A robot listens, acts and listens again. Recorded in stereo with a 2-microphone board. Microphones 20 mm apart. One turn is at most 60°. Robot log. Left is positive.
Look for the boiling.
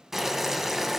note: The boiling: about 15° right or 165° right.
cmd yaw -15
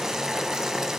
note: So it is at 150° right.
cmd yaw -60
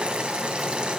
note: The boiling is now 100° right.
cmd yaw -60
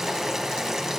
note: The boiling is now 25° right.
cmd yaw -25
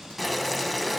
end: Facing the boiling, 1 to 2 m away.